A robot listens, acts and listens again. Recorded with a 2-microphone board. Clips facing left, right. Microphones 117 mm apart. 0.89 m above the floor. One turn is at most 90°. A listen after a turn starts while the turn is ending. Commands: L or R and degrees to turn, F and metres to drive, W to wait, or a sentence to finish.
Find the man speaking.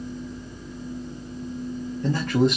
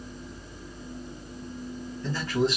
L60
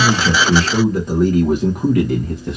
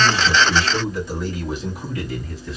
L60
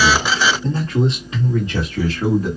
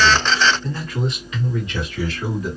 L40
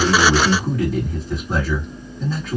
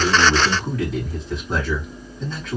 Facing the man speaking.